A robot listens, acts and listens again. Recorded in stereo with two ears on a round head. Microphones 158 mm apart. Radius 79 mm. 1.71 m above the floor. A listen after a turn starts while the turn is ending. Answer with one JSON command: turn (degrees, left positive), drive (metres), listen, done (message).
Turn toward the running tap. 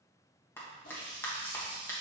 {"turn": 50}
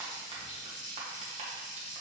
{"turn": 70}
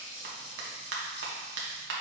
{"turn": 35}
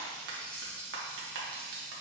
{"turn": 10}
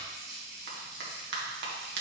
{"done": "Found it: a running tap, straight ahead."}